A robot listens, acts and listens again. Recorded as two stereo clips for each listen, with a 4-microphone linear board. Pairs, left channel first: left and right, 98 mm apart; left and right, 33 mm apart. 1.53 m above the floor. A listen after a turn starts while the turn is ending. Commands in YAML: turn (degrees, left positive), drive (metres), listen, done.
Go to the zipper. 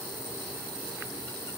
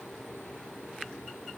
listen: true
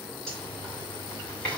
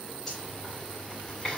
turn: 30
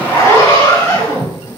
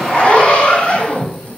turn: 145
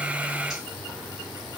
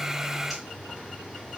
listen: true
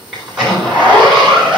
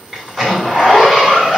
drive: 1.0
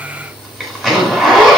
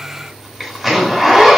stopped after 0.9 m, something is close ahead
done: "I am next to the zipper."